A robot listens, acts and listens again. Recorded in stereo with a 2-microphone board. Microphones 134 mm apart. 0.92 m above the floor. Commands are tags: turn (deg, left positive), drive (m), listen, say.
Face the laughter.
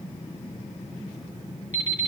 <listen/>
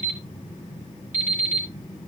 <listen/>
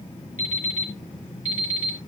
<say>I can't make out laughter, only an alarm clock.</say>